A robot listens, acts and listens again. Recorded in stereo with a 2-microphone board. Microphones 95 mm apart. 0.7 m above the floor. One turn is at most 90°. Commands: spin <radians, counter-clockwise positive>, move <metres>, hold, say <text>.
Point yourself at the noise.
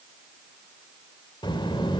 spin 0.96
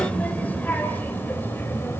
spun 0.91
spin 0.44
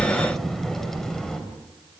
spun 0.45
say Facing the child speaking.